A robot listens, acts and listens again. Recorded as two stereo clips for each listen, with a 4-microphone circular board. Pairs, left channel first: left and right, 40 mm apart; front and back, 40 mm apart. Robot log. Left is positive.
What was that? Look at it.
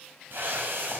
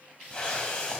note: The whoosh: 70° right.
cmd yaw -70
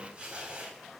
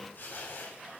note: The whoosh is now 30° right.
cmd yaw -30
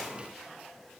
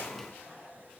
end: Facing the whoosh, 2 to 4 m away.